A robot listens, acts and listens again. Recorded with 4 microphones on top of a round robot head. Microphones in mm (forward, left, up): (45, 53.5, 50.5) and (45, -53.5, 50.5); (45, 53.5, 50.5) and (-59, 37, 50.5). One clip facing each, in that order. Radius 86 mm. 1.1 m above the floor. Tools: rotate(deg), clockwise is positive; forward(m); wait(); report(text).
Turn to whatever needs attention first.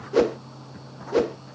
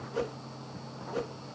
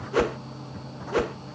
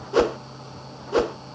wait()
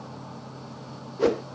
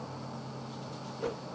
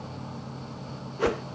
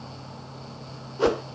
wait()
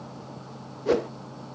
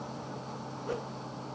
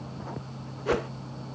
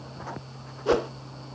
report("I can't make out anything urgent to turn to.")